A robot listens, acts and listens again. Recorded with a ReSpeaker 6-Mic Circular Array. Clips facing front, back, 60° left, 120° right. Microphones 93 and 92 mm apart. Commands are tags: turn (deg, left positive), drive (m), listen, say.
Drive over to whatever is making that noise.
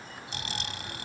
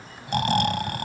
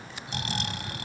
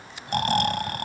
<turn deg="-155"/>
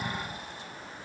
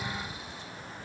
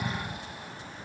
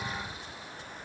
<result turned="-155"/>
<turn deg="35"/>
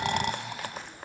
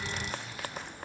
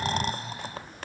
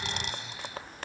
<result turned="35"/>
<turn deg="10"/>
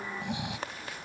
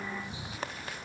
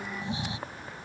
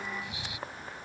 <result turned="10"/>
<drive m="1.0"/>
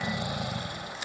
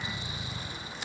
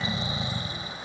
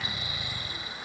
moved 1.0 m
<drive m="1.0"/>
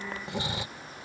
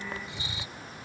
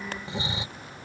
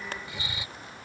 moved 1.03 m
<drive m="1.0"/>
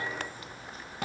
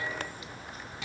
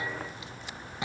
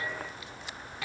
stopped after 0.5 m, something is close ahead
<say>I am next to the snoring.</say>